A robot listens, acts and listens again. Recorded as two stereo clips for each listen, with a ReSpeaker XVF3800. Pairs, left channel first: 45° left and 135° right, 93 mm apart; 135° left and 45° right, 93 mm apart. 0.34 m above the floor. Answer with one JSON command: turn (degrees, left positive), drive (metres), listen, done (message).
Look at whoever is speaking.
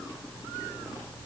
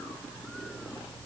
{"listen": true}
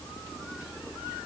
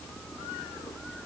{"listen": true}
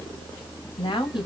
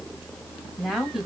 {"turn": 40}
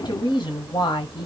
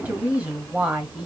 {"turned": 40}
{"turn": 30}
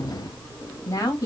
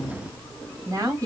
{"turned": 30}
{"done": "Facing the woman speaking, 1 to 2 m away."}